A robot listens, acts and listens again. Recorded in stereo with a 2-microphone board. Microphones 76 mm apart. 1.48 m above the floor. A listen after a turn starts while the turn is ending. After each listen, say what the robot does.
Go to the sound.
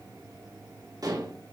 Turn 55° right.
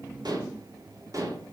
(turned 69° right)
Turn 50° right.
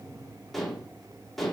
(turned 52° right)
Drive 1.0 m forward.
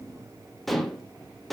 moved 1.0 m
Drive 1.0 m forward.
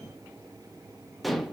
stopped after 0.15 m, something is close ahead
I am next to the dishes clattering.